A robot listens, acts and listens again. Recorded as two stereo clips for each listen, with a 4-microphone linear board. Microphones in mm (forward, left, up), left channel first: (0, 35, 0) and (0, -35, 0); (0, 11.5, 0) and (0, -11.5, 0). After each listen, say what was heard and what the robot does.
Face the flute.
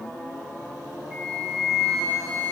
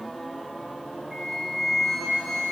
Turn 30° right.
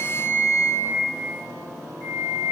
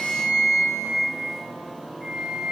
So it is at 25° left. Turn 25° left.
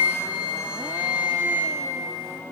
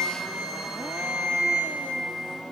Found it: a flute, straight ahead.